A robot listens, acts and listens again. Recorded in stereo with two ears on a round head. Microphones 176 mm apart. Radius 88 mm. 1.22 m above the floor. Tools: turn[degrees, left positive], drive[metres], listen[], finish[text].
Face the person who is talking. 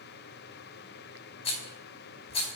Action: listen[]
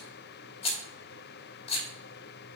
Action: listen[]
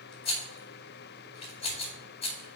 Action: finish[I can't make out anyone speaking to turn to.]